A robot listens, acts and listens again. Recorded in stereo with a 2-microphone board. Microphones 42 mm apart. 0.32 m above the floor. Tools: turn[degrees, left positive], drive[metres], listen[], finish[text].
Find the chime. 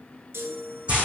Action: turn[-90]
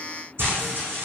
Action: listen[]
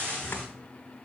Action: listen[]
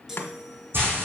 Thought: The chime is now 10° right.
Action: turn[-10]
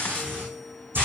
Action: listen[]
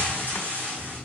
Action: listen[]
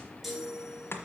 Action: finish[Found it: a chime, straight ahead, 1 to 2 m away.]